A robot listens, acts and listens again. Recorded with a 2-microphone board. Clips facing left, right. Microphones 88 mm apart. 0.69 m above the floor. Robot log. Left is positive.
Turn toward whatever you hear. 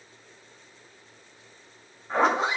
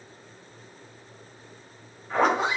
note: The zipper: about 35° left or 145° left.
cmd yaw +35
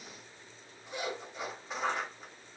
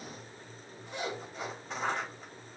end: Found it: a zipper, straight ahead, 1 to 2 m away.